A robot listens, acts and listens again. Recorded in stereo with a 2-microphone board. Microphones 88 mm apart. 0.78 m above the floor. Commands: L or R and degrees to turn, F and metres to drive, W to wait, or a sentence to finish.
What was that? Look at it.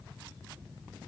W
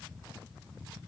W
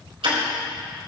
R90
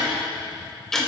Found it: ticking, straight ahead, 2 to 4 m away.